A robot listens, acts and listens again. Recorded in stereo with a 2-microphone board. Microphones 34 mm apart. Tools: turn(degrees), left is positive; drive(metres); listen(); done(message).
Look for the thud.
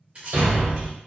turn(degrees=-90)
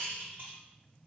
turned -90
done("I heard a thud from this way, but can't make it out now.")